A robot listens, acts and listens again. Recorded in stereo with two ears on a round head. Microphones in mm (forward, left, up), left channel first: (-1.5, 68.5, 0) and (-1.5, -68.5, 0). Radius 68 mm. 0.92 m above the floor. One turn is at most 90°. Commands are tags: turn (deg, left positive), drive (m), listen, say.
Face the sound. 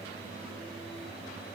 <listen/>
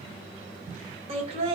<turn deg="-40"/>
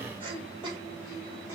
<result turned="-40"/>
<turn deg="-30"/>
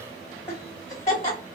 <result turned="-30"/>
<turn deg="25"/>
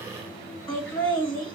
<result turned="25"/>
<turn deg="10"/>
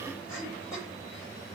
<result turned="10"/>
<say>Found it: laughter, straight ahead.</say>